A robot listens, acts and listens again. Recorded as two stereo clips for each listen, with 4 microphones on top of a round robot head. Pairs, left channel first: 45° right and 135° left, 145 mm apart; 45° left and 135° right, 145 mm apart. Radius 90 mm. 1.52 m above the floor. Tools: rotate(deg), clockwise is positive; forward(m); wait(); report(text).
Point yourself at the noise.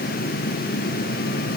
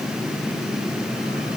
wait()
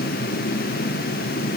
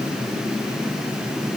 wait()
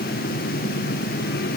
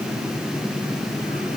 report("I can't make out anything.")